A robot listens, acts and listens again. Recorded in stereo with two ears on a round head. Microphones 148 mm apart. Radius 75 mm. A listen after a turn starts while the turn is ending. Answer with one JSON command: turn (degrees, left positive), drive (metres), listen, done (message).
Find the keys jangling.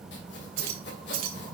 {"turn": -60}
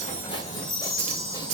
{"turn": -40}
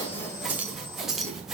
{"done": "Facing the keys jangling, 1 to 2 m away."}